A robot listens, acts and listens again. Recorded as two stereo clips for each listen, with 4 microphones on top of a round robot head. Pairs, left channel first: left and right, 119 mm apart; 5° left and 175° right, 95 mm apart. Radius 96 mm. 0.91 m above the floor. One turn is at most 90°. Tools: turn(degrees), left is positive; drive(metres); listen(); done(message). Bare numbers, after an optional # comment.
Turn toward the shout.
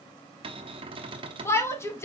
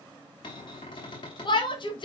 # The shout: 25° left.
turn(25)
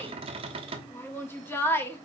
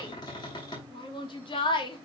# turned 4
# The shout is now 20° left.
turn(20)
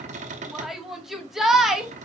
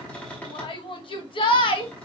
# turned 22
done("Facing the shout, 1 to 2 m away.")